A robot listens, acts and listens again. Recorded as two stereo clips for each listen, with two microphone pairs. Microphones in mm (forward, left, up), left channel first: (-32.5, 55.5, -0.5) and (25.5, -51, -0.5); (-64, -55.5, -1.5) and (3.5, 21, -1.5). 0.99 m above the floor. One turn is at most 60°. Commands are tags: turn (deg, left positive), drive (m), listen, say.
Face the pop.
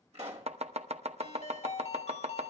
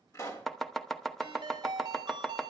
<turn deg="-60"/>
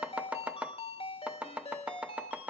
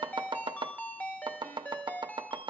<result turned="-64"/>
<turn deg="-15"/>
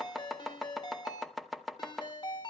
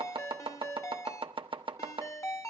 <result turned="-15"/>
<say>I heard a pop from this way, but can't make it out now.</say>